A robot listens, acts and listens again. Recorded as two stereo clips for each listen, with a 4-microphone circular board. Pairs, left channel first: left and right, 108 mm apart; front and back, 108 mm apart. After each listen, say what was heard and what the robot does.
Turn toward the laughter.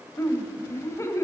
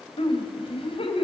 The laughter: 25° left. Turn 25° left.
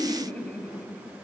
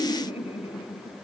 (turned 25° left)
The laughter is now 15° left. Turn 15° left.
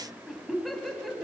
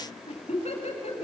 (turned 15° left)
Found it: laughter, straight ahead.